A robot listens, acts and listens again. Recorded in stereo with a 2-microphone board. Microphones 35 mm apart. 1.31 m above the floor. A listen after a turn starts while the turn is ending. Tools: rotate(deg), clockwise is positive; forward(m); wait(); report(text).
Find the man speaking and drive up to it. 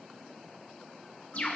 wait()
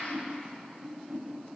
wait()
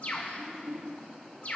report("I can't make out a man speaking to turn to.")